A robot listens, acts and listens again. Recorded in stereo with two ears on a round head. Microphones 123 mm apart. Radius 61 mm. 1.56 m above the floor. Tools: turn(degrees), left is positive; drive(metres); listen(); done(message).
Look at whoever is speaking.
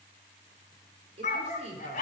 turn(degrees=-50)
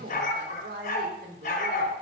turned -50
turn(degrees=-80)
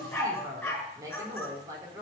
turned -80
turn(degrees=-25)
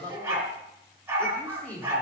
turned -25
turn(degrees=15)
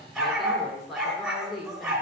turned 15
done("Facing the woman speaking, 2 to 4 m away.")